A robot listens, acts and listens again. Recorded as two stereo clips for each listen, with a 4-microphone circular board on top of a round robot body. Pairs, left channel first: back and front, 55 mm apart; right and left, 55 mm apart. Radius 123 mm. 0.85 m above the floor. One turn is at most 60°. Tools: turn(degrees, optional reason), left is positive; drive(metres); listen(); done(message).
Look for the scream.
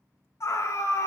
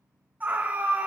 turn(degrees=60, reason="The scream: 150° left.")
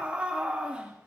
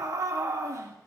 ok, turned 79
turn(degrees=60, reason="The scream is now 70° left.")
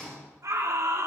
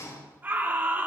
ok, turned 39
turn(degrees=30, reason="The scream is now 30° left.")
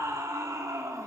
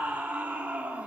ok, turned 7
turn(degrees=25, reason="The scream is now 25° left.")
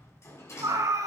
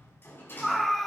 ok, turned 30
done("Facing the scream.")